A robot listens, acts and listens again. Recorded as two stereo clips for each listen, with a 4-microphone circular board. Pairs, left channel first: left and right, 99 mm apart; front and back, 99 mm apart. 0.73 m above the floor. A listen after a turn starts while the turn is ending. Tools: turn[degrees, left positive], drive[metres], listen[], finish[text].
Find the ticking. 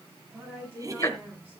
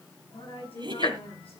Thought: The ticking: 35° left.
Action: turn[35]
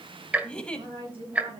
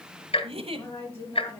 Thought: The ticking is now 15° right.
Action: turn[-15]
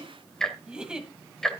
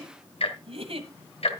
Action: finish[Found it: ticking, straight ahead.]